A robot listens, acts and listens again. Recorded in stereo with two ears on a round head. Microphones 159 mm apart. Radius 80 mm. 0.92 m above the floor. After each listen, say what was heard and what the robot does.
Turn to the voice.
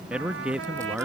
Turn 30° right.
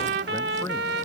Keep listening.
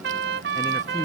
Keep listening.
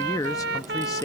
So it is at 20° left. Turn 20° left.
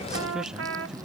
Found it: a man speaking, straight ahead.